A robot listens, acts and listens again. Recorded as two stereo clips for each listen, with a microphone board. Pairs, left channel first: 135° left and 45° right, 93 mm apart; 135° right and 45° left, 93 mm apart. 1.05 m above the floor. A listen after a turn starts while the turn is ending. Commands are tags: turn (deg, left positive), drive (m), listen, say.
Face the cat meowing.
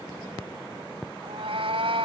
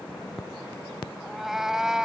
<turn deg="-40"/>
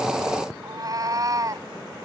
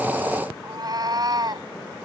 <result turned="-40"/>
<say>Found it: a cat meowing, straight ahead.</say>